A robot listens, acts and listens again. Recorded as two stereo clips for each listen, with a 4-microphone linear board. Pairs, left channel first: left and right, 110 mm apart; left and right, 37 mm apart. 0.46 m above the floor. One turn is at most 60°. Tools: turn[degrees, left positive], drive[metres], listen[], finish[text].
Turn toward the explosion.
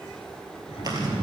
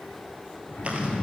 Thought: The explosion: about 70° left or 110° left.
Action: turn[60]
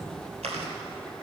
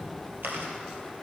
Action: listen[]
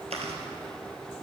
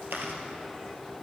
Action: finish[I heard an explosion, but can't make it out now. It was about 10° left or 50° left.]